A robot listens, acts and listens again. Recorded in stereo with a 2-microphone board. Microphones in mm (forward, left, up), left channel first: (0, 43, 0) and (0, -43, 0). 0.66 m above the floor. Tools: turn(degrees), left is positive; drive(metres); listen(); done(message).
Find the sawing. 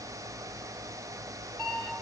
listen()
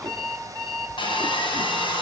turn(degrees=90)
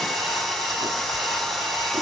done("Facing the sawing, over 4 m away.")